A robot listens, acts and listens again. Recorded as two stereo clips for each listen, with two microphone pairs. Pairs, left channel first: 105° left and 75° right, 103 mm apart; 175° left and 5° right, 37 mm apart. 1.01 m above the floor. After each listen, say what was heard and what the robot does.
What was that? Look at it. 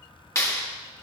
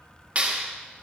The clap: 45° left. Turn 45° left.
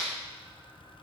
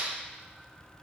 The clap is now 30° left. Turn 30° left.
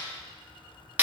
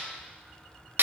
Found it: a clap, straight ahead, 1 to 2 m away.